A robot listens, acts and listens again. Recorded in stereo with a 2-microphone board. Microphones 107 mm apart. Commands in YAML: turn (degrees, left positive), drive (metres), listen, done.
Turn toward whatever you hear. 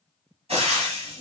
turn: -65
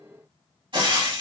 turn: -50
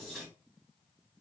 listen: true
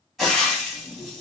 done: "Facing the frying, 1 to 2 m away."